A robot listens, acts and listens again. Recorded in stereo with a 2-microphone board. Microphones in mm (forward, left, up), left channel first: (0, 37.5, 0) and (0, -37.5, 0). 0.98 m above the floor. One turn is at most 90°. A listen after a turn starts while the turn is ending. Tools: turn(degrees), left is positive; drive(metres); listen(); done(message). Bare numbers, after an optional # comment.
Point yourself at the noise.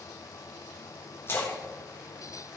# The splash: about 30° left or 150° left.
turn(30)
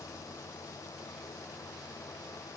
listen()
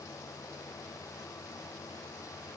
done("I heard a splash, but can't make it out now. It was about straight ahead or 120° left.")